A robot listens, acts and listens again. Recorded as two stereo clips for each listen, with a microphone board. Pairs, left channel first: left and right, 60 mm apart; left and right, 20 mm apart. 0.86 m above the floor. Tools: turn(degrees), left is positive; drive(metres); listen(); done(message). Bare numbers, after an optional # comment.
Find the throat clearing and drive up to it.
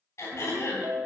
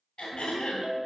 # The throat clearing: about 50° left or 130° left.
turn(50)
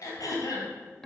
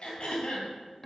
# So it is at 80° left.
turn(80)
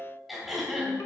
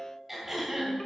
drive(1.0)
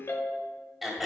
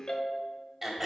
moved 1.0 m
drive(1.0)
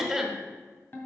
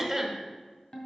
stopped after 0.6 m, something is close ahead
done("I am next to the throat clearing.")